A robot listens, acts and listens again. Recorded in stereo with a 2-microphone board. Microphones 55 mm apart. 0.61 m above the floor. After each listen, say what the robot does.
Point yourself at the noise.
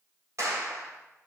Turn 70° right.
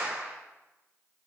Turn 35° right.
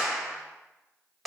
Facing the clap.